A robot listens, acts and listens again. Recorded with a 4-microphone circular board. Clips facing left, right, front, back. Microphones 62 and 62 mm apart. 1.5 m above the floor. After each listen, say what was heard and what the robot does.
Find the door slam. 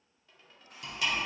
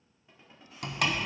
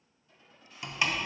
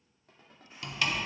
The door slam: 65° right. Turn 65° right.
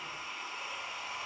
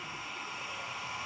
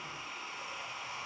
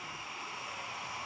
Facing where the door slam came from. I can't hear it now.